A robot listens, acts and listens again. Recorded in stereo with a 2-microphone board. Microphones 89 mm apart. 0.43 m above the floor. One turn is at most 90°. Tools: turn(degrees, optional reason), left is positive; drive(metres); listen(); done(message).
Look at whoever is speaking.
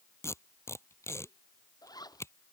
listen()
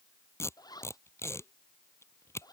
listen()
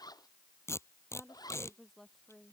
turn(degrees=30)
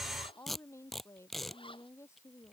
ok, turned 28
turn(degrees=90, reason="So it is at 150° left.")
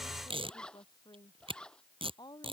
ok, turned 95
turn(degrees=55, reason="The woman speaking is now 55° left.")
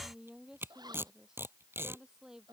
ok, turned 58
done("Found it: a woman speaking, straight ahead.")